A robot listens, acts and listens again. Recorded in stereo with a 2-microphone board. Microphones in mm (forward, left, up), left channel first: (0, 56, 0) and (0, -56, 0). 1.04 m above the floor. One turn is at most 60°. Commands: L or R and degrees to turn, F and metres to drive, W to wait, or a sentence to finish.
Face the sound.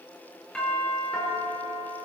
L30
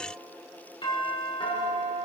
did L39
L60
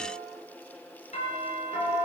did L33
L60
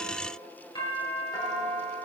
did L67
L35
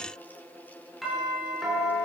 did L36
Facing the doorbell, over 4 m away.